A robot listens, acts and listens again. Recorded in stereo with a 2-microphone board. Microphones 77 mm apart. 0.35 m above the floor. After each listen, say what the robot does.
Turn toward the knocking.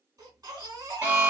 Keep listening.
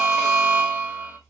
Keep listening.
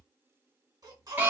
I can't make out knocking to turn to.